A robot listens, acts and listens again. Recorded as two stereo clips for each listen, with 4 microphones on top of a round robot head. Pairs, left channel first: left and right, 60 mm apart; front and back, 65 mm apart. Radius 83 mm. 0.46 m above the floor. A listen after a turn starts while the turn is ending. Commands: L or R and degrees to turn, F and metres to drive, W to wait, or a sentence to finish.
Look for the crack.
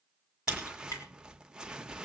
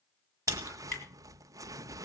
L45
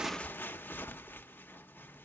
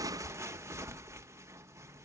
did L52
R10
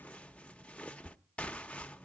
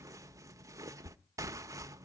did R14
Facing where the crack came from. I can't hear it now.